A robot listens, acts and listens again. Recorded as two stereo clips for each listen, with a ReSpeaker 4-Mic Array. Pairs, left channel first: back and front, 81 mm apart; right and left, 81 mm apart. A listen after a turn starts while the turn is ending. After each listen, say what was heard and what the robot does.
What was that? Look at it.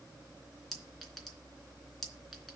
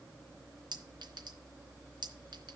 The clink: 95° left. Turn 95° left.
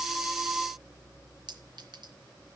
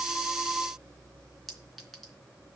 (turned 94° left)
Facing the clink.